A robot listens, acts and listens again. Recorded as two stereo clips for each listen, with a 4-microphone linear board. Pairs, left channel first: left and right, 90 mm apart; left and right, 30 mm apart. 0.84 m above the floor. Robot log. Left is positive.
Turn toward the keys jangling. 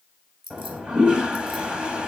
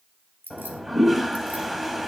cmd yaw -90
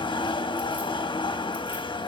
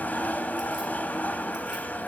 cmd idle
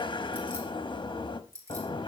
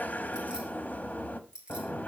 note: The keys jangling is now 35° right.
cmd yaw -35
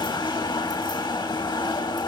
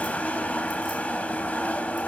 cmd idle
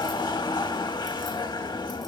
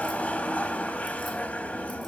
cmd idle
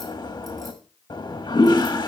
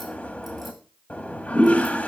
end: I heard keys jangling from this way, but can't make it out now.